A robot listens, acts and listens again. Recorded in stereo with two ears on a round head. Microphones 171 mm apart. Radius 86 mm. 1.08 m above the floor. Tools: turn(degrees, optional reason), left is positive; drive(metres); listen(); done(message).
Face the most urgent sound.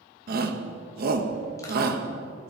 turn(degrees=-50, reason="The shout: about 50° right or 130° right.")
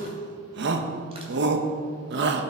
turn(degrees=-70, reason="So it is at 70° right.")
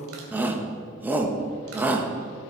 turn(degrees=-10, reason="The shout is now 10° right.")
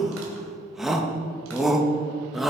done("Facing the shout.")